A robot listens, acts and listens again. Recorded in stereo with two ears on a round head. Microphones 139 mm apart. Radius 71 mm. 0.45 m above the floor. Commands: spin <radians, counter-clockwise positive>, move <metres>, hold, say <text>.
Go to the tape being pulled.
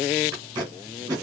spin -0.52
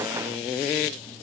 hold
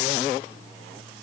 hold
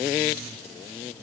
say I heard tape being pulled, but can't make it out now. It was about straight ahead or 120° right. I did not reach it.